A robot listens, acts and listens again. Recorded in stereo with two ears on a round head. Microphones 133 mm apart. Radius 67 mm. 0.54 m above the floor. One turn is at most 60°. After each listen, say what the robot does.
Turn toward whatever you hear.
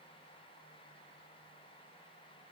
Keep listening.
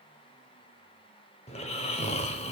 Turn 45° left.
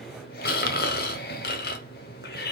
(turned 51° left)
Turn 60° left.
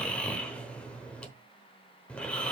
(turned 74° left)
Turn 10° left.
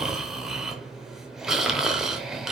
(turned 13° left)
Found it: snoring, straight ahead.